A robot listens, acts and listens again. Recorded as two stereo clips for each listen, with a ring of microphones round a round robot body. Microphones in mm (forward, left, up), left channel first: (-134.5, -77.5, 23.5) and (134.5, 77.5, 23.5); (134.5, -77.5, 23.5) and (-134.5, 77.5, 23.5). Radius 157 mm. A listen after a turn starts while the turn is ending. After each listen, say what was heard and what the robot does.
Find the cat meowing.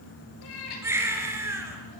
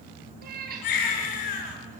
The cat meowing: 145° right. Turn 145° right.
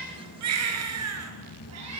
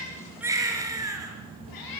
The cat meowing is now 10° right. Turn 10° right.
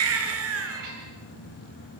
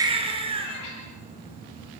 Facing the cat meowing, over 4 m away.